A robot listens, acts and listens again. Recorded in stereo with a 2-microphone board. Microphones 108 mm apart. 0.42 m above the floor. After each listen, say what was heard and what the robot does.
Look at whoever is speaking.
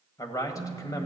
The man speaking: about 30° left or 150° left. Turn 30° left.
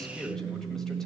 Found it: a man speaking, straight ahead.